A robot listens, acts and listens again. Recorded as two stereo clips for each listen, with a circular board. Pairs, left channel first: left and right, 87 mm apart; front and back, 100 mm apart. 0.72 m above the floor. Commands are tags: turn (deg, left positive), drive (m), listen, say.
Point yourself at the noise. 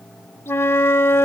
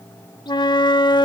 <turn deg="30"/>
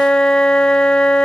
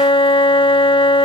<turn deg="10"/>
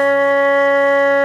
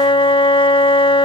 <say>Found it: a flute, straight ahead, under 1 m away.</say>